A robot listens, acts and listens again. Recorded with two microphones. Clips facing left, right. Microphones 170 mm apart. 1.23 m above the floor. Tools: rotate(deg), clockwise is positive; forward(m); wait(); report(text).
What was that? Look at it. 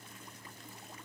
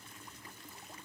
wait()
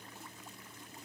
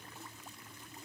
wait()
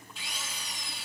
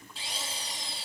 rotate(35)
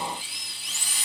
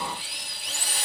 rotate(105)
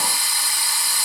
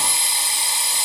rotate(25)
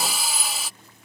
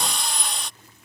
report("Found it: a drill, straight ahead.")